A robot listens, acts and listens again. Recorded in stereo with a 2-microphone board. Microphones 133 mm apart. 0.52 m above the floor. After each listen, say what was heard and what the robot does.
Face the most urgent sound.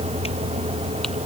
Keep listening.
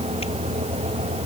Keep listening.
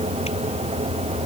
I can't make out anything urgent to turn to.